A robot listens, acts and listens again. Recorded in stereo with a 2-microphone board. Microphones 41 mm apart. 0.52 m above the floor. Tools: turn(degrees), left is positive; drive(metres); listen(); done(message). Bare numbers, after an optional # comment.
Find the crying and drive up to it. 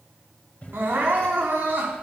# The crying: about 55° right or 125° right.
turn(-55)
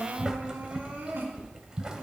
# So it is at 65° right.
turn(-65)
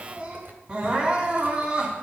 # The crying is now 35° right.
turn(-35)
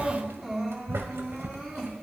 # The crying is now 10° right.
turn(-10)
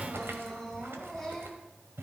drive(1.0)
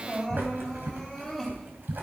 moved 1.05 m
drive(1.0)
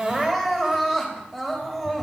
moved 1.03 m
drive(1.0)
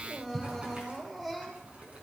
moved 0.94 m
drive(1.0)
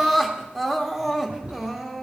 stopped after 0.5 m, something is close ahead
done("Arrived at the crying, straight ahead.")